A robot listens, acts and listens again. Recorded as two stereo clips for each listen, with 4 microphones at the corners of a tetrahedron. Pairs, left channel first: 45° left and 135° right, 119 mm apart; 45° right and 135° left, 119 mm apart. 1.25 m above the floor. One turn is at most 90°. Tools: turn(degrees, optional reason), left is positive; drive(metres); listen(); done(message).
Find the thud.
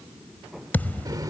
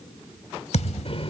turn(degrees=-30, reason="The thud: 30° right.")
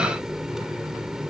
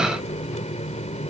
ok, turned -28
done("Facing where the thud came from. I can't hear it now.")